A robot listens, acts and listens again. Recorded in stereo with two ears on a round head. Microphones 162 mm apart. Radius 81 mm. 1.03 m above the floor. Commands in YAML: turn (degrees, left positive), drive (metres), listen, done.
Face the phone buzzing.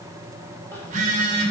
turn: -45
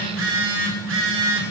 turn: -95
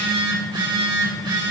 turn: -25
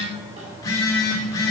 turn: 20
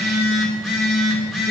done: "Found it: a phone buzzing, straight ahead."